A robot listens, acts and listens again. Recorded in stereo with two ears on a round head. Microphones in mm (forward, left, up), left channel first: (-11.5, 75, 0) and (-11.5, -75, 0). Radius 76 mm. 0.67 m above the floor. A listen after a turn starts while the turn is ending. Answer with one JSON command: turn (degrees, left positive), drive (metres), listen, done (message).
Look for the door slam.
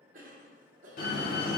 {"turn": 55}
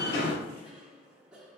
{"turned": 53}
{"listen": true}
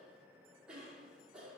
{"done": "I heard a door slam, but can't make it out now. It was about 5° left or 70° left."}